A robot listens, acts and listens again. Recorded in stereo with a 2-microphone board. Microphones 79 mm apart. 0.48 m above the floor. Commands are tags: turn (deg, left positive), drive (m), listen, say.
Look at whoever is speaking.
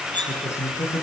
<turn deg="35"/>
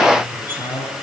<turn deg="110"/>
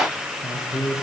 <turn deg="10"/>
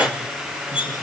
<listen/>
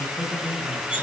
<say>Facing the man speaking, over 4 m away.</say>